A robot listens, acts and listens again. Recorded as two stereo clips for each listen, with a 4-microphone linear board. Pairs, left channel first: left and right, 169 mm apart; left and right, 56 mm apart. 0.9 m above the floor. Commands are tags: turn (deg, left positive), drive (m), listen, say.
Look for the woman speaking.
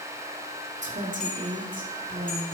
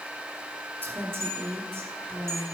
<turn deg="-55"/>
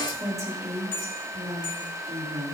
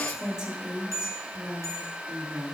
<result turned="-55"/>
<turn deg="-35"/>
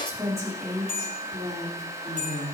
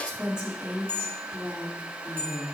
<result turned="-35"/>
<turn deg="-20"/>
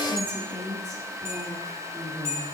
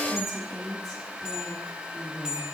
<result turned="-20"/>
<say>Found it: a woman speaking, straight ahead, 2 to 4 m away.</say>